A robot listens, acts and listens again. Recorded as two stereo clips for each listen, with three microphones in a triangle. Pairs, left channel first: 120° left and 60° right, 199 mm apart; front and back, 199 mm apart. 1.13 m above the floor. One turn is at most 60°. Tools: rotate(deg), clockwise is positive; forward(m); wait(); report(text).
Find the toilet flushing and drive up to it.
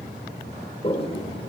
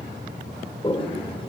rotate(-60)
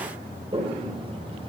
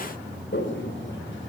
forward(1.0)
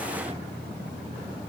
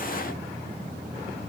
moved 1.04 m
wait()
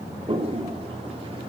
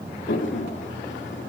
forward(1.0)
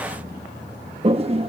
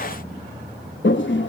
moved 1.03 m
forward(1.0)
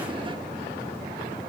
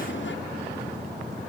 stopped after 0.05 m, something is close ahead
wait()
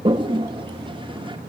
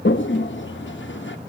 report("I am next to the toilet flushing.")